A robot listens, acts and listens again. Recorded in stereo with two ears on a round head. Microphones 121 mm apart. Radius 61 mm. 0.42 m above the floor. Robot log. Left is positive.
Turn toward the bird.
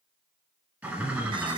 cmd yaw -30
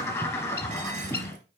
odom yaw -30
note: So it is at 20° left.
cmd yaw +20
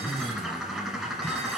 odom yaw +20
end: Facing the bird, 1 to 2 m away.